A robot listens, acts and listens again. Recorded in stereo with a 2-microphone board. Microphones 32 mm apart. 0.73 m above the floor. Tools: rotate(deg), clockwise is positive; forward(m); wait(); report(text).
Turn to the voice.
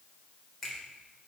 wait()
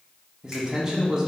rotate(20)
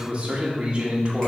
rotate(135)
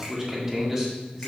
rotate(15)
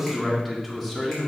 report("Facing the man speaking, 2 to 4 m away.")